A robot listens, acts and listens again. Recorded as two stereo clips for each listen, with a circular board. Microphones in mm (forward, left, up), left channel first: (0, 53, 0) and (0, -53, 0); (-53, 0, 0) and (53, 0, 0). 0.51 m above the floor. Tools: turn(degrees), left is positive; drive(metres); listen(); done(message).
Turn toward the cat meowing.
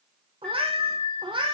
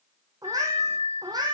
turn(degrees=-50)
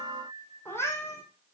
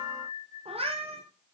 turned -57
turn(degrees=25)
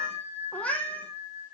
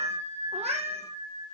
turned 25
turn(degrees=10)
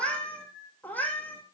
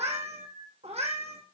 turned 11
turn(degrees=15)
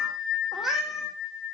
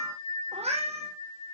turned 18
done("Facing the cat meowing.")